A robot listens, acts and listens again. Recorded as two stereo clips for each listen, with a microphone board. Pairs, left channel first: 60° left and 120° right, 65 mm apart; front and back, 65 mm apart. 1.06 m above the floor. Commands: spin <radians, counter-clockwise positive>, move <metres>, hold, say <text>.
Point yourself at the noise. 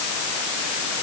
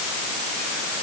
hold
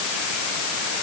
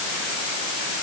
hold
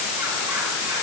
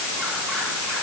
say I can't make out anything to turn to.